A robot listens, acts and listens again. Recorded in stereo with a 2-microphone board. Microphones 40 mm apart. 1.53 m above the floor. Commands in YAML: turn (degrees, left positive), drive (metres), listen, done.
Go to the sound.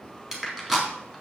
turn: -30
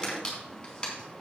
turn: 20
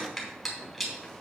drive: 1.0
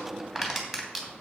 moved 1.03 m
drive: 1.0
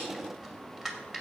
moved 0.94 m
turn: -10
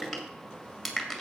drive: 1.0
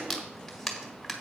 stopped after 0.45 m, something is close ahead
done: "Arrived at the crushing, straight ahead."